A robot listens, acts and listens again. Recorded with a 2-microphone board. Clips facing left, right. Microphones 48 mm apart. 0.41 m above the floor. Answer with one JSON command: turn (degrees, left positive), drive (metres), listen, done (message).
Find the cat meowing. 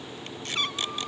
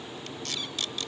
{"turn": 60}
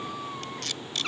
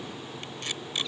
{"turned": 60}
{"turn": 65}
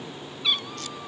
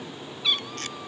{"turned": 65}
{"done": "Facing the cat meowing."}